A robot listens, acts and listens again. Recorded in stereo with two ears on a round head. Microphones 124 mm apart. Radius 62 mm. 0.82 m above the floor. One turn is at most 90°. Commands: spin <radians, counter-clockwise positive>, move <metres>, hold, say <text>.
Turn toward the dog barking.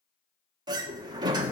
hold
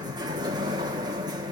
hold
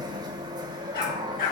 spin 1.31
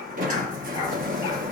hold
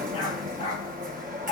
spin 0.70
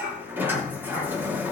spin -0.35
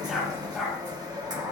say Facing the dog barking, over 4 m away.